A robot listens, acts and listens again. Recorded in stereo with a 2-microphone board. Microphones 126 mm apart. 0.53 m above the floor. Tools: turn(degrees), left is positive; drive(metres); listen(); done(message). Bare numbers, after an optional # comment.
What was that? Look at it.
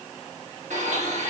turn(-90)
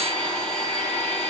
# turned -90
done("Found it: a blender, straight ahead, 1 to 2 m away.")